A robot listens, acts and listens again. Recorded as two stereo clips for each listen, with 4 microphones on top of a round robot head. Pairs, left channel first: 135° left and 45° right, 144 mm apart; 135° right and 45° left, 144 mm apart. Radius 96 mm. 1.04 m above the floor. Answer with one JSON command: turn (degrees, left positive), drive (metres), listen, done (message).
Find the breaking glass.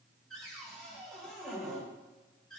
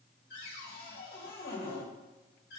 {"listen": true}
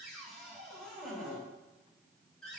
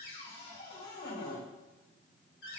{"listen": true}
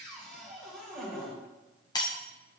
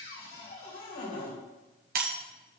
{"turn": 70}
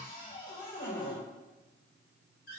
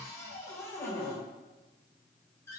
{"done": "Facing where the breaking glass came from. I can't hear it now."}